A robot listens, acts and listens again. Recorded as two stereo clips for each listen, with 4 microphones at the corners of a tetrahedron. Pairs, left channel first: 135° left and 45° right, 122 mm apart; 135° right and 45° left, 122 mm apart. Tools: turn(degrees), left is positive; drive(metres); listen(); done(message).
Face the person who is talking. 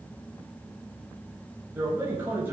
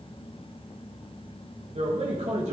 turn(degrees=30)
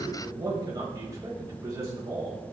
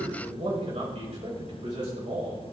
turn(degrees=15)
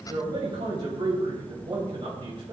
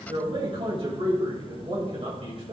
done("Facing the man speaking.")